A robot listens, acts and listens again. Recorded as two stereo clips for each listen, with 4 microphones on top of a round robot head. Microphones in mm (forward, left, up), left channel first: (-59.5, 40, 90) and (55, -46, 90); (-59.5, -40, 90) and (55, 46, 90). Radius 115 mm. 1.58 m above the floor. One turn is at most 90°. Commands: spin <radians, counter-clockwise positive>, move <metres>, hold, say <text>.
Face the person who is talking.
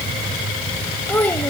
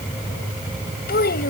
spin -1.57
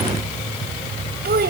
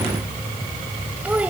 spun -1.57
spin -0.79
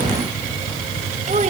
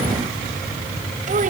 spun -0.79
hold
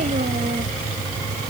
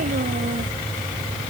hold
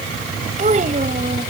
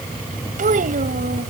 say Found it: a child speaking, straight ahead.